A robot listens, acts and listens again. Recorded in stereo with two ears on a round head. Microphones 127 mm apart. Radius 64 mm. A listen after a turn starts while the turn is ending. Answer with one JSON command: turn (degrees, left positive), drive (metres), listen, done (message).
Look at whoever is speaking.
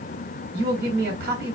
{"turn": -75}
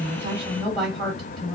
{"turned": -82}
{"done": "Found it: a woman speaking, straight ahead."}